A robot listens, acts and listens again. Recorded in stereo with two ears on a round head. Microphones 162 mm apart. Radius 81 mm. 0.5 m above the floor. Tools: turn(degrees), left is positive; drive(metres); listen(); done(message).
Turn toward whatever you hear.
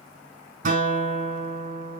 turn(degrees=-50)
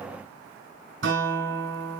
turn(degrees=-75)
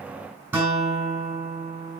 turn(degrees=-10)
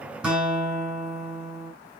done("Facing the guitar, over 4 m away.")